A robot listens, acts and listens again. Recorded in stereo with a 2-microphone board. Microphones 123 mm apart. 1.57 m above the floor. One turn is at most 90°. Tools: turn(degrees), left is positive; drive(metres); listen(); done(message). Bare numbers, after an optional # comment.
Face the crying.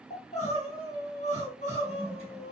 # The crying: about 75° left or 105° left.
turn(75)
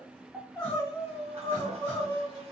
# So it is at 15° left.
turn(15)
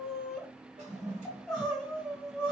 done("Found it: crying, straight ahead, 1 to 2 m away.")